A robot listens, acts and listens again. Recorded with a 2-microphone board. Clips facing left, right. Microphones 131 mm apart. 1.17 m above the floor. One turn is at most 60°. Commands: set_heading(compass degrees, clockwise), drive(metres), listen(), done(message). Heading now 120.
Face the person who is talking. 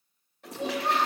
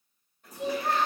set_heading(90)
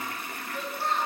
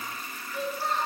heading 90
done("Facing the child speaking, over 4 m away.")